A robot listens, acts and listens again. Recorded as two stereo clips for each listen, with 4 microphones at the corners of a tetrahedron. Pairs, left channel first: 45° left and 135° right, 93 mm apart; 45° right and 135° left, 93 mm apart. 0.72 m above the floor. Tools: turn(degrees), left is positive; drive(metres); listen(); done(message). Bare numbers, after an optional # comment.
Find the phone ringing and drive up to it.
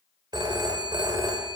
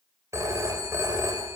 # The phone ringing: 170° right.
turn(-170)
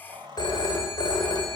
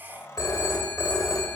drive(1.0)
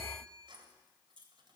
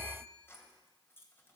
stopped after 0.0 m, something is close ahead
done("Blocked. The phone ringing is further on, straight ahead.")